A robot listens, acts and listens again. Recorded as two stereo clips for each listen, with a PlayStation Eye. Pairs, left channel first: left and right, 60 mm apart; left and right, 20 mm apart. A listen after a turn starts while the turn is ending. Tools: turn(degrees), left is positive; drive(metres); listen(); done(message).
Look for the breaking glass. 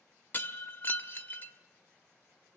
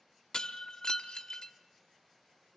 turn(degrees=35)
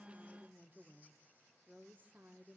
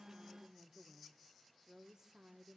listen()
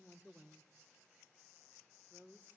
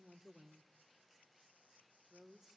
done("I heard breaking glass, but can't make it out now. It was about straight ahead or 110° left.")